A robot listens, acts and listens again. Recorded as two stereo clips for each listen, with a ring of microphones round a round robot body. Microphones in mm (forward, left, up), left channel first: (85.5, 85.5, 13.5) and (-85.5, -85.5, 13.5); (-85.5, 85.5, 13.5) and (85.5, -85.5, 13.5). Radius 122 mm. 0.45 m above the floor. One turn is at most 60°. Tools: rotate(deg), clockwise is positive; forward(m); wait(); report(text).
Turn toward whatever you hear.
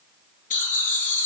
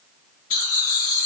rotate(-60)
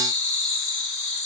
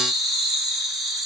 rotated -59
rotate(-45)
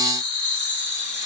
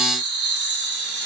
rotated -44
report("Found it: laughter, straight ahead, over 4 m away.")